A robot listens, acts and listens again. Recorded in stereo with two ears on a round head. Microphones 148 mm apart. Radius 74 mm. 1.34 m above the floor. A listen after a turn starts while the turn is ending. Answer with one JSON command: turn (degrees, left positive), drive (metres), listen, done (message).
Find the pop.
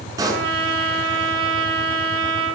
{"turn": -20}
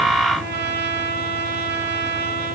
{"listen": true}
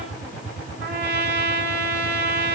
{"done": "I heard a pop, but can't make it out now. It was about straight ahead or 140° right."}